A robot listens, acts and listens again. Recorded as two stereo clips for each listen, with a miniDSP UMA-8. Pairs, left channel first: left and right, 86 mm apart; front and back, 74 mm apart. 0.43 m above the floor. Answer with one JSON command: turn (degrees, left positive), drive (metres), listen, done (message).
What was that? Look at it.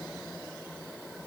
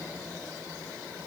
{"listen": true}
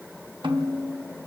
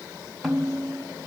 {"turn": -90}
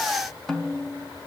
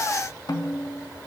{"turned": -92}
{"done": "Facing the snare drum."}